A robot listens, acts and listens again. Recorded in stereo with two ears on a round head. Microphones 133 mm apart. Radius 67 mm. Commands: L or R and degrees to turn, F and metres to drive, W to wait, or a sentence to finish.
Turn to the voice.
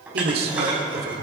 R90
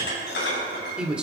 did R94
Found it: a man speaking, straight ahead.